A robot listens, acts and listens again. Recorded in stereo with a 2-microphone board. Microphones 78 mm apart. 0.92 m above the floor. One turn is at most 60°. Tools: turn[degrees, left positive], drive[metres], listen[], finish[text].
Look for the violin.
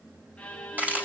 Thought: The violin: about 15° left or 165° left.
Action: turn[15]
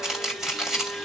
Action: finish[Facing the violin, 1 to 2 m away.]